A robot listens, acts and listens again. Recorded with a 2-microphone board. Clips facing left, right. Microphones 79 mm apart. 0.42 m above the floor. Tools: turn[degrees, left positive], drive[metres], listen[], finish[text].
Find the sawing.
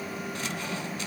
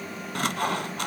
Action: turn[-90]
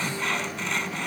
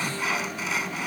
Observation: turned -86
Action: finish[Found it: sawing, straight ahead, 1 to 2 m away.]